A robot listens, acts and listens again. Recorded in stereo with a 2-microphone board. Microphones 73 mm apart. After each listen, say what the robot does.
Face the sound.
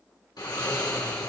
Turn 90° left.
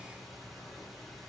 Found it: snoring, straight ahead, 2 to 4 m away.